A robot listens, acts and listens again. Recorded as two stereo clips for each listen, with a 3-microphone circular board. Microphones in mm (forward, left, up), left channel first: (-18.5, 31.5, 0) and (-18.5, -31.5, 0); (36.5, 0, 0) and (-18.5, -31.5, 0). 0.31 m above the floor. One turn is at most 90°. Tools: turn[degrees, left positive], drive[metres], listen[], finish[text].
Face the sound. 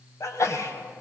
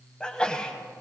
Thought: The sneeze: 100° left.
Action: turn[90]
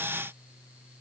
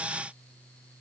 Thought: Nothing new. It was at 10° left.
Action: turn[10]
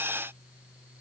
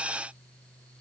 Action: finish[Facing where the sneeze came from. I can't hear it now.]